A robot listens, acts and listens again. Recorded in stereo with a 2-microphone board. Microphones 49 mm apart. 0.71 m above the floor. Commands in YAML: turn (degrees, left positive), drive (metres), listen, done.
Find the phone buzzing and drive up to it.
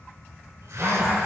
turn: -70
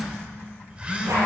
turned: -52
turn: -25
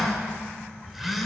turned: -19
drive: 1.0
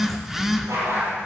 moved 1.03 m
turn: -10
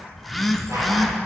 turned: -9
drive: 1.0
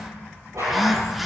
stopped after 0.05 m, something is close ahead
done: "I am next to the phone buzzing."